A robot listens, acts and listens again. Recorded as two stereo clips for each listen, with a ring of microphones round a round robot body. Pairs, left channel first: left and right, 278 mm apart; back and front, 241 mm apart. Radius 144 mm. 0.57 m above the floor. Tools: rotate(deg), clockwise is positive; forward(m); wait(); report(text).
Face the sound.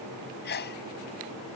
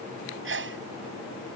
rotate(-35)
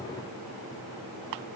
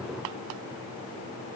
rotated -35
report("Facing where the sneeze came from. I can't hear it now.")